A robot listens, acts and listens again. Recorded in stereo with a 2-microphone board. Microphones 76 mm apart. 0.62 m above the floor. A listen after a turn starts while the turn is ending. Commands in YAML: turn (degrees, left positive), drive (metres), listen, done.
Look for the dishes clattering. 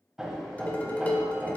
turn: 25
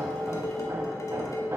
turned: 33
turn: 120
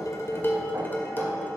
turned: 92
turn: 30
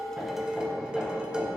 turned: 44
turn: -15
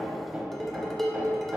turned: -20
done: "Found it: dishes clattering, straight ahead, 1 to 2 m away."